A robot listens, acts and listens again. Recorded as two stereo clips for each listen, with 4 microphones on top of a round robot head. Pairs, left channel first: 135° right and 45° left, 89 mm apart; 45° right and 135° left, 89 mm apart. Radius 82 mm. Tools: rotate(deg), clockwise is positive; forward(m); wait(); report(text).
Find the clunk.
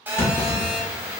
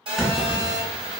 rotate(130)
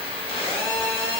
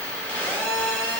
report("Facing where the clunk came from. I can't hear it now.")